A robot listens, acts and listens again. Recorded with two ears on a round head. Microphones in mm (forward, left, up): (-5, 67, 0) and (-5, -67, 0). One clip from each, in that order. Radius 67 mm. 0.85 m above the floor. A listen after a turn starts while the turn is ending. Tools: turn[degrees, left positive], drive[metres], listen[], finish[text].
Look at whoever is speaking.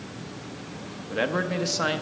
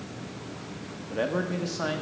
Thought: The man speaking: about 40° left or 140° left.
Action: turn[40]
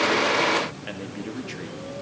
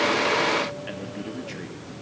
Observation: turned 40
Action: listen[]
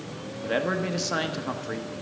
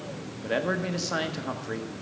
Action: finish[Facing the man speaking.]